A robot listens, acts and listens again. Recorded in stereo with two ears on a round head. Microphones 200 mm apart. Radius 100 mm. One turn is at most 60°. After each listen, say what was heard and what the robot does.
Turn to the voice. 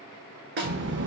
The child speaking: about 50° right or 130° right. Turn 50° right.
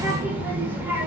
So it is at 10° right. Turn 10° right.
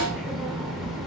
Facing the child speaking, under 1 m away.